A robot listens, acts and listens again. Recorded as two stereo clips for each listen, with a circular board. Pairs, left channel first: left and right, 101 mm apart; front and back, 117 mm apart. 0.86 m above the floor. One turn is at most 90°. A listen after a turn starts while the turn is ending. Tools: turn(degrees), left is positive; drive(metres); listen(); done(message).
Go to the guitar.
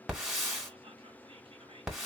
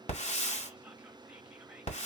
listen()
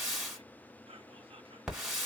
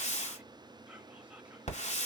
listen()
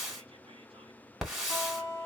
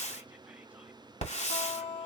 turn(degrees=45)
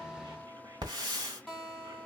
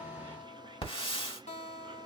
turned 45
drive(metres=1.0)
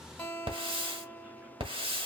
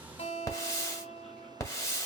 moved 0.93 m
turn(degrees=15)
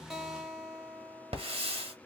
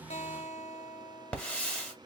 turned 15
drive(metres=1.0)
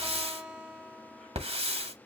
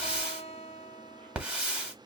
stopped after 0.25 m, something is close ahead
turn(degrees=-10)
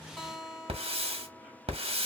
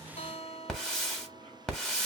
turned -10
done("I am next to the guitar.")